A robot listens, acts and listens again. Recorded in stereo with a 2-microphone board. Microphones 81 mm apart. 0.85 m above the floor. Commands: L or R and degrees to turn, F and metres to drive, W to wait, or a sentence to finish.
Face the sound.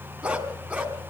R15
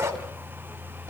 R35
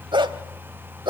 R100
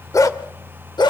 L65
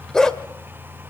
Found it: a dog barking, straight ahead.